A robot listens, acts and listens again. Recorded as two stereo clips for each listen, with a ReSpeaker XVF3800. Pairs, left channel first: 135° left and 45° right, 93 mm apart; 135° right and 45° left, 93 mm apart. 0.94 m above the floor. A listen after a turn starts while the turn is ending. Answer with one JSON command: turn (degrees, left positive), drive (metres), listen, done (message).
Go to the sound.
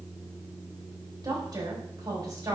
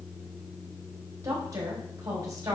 {"turn": -10}
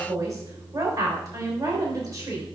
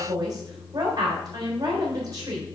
{"drive": 1.0}
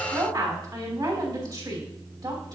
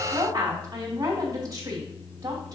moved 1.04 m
{"drive": 1.0}
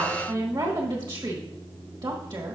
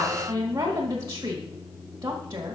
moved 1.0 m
{"turn": -10}
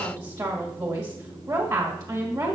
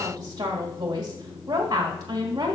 {"drive": 1.0}
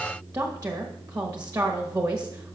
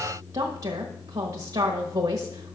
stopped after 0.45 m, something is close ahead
{"done": "I am next to the woman speaking."}